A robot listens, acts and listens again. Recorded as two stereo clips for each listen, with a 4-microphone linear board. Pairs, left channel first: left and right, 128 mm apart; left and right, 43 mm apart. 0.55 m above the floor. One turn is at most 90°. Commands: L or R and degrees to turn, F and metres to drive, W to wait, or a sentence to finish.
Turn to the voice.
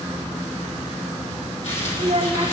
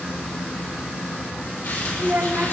R60
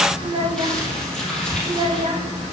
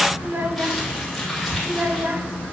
R55
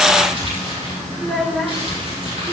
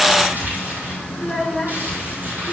Facing the child speaking, 1 to 2 m away.